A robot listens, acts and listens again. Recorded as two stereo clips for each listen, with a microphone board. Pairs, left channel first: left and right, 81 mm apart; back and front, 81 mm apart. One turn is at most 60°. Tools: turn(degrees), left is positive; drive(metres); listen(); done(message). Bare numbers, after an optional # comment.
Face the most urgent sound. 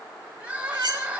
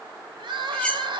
# The crying: 15° right.
turn(-15)
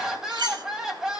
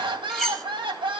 done("Facing the crying, 1 to 2 m away.")